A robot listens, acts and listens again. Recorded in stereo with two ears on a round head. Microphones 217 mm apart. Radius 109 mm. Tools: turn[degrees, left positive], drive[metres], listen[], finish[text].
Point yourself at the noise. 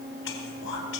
Thought: The whispering: about 55° left or 125° left.
Action: turn[55]
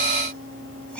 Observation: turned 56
Action: listen[]
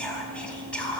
Action: finish[Facing the whispering, 2 to 4 m away.]